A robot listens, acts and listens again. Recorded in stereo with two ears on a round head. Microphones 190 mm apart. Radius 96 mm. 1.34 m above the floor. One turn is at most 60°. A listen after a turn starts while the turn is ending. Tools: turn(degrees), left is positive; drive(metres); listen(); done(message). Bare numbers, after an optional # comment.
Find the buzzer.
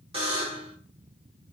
# The buzzer: about 25° right or 155° right.
turn(-25)
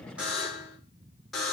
done("Facing the buzzer.")